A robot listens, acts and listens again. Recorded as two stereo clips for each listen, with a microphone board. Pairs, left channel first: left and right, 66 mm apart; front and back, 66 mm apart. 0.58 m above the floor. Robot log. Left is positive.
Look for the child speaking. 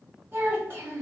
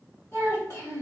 note: The child speaking: 45° right.
cmd yaw -45
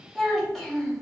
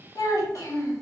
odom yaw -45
end: Facing the child speaking.